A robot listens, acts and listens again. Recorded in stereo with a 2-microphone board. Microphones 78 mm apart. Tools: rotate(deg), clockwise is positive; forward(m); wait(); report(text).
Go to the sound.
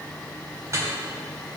rotate(40)
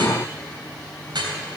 rotate(100)
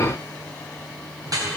rotate(50)
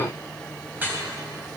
rotate(25)
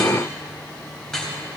forward(1.0)
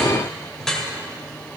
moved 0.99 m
forward(1.0)
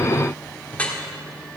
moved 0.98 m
rotate(-20)
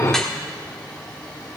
forward(1.0)
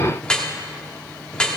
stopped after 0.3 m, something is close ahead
rotate(-10)
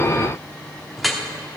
report("I am next to the dripping.")